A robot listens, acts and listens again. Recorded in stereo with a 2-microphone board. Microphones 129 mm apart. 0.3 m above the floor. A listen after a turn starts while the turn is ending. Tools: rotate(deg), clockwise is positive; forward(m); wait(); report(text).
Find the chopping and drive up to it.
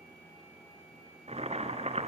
wait()
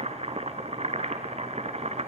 wait()
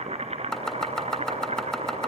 rotate(-30)
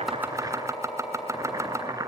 rotate(20)
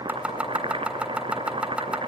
forward(1.0)
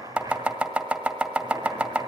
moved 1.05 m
rotate(10)
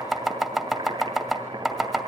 forward(1.0)
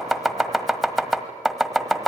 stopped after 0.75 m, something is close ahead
report("I am next to the chopping.")